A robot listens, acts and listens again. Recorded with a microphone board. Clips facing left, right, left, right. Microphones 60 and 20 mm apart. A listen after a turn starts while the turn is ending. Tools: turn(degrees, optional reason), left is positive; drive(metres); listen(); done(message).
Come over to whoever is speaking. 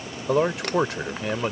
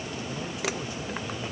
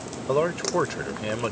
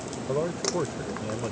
turn(degrees=75, reason="The man speaking: about 75° left or 105° left.")
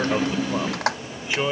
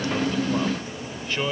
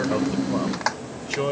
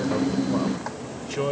turn(degrees=10, reason="So it is at 10° left.")
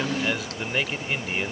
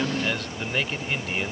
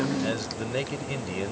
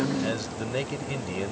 drive(metres=1.0)
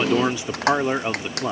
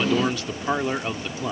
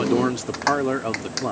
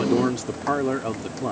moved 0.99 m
turn(degrees=15, reason="The man speaking is now 15° left.")
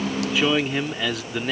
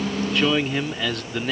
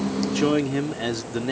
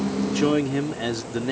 drive(metres=1.0)
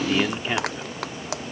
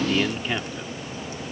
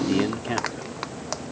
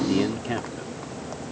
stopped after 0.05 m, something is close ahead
done("Arrived at the man speaking, straight ahead.")